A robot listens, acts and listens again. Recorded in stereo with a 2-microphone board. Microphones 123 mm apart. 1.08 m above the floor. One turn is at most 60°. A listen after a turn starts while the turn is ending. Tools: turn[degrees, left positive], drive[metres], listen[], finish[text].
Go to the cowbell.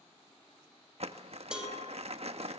Action: turn[-30]
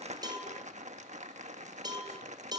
Thought: So it is at 145° right.
Action: turn[-60]
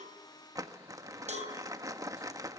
Thought: The cowbell is now 85° right.
Action: turn[-60]
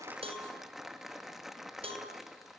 Thought: The cowbell is now 55° right.
Action: turn[-55]
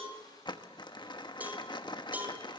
Thought: The cowbell is now 15° right.
Action: turn[-15]
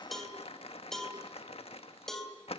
Action: drive[1.0]
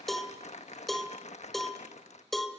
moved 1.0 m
Action: drive[1.0]
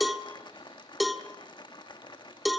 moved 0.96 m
Action: drive[1.0]
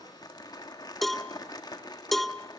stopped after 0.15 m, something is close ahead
Action: finish[I am next to the cowbell.]